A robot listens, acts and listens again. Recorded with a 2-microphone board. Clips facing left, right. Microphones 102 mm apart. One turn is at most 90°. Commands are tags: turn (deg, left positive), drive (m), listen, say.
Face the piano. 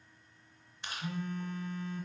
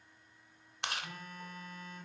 <listen/>
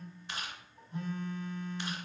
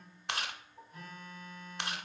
<turn deg="-20"/>
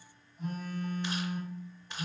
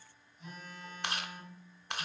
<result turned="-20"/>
<listen/>
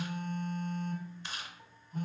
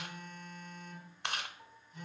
<say>Found it: a piano, straight ahead, 1 to 2 m away.</say>